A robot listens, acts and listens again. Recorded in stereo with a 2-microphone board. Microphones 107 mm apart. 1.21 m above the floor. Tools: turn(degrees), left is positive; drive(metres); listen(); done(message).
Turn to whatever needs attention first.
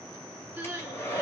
turn(degrees=-30)
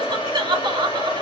turn(degrees=-135)
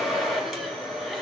listen()
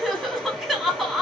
done("Facing the crying.")